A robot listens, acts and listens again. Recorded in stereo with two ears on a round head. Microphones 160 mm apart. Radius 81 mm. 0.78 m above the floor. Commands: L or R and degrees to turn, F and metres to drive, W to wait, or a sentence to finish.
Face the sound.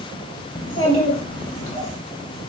L30
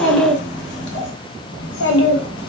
L95
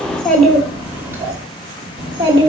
R25
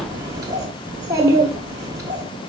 R20
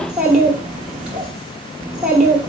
Found it: a child speaking, straight ahead.